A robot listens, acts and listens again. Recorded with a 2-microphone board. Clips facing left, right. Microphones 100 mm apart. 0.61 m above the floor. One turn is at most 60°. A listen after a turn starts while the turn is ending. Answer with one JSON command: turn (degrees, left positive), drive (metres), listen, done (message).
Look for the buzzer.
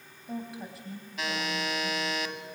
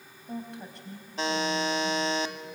{"turn": -30}
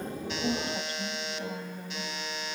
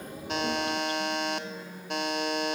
{"turn": -60}
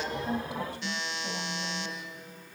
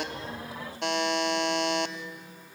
{"turn": -60}
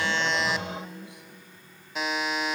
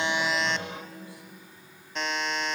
{"done": "Facing the buzzer."}